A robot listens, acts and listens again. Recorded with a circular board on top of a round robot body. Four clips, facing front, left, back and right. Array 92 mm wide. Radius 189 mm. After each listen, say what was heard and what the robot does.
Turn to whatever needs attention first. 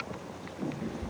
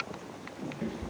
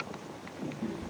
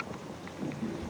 Keep listening.
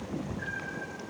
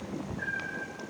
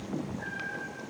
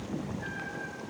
Keep listening.
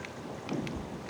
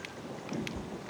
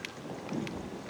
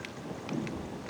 I can't make out anything urgent, only a cat meowing.